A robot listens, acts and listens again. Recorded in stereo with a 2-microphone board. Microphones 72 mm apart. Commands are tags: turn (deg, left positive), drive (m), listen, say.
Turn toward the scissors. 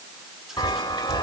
<listen/>
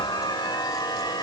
<listen/>
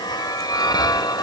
<say>I can't make out scissors, only a chime.</say>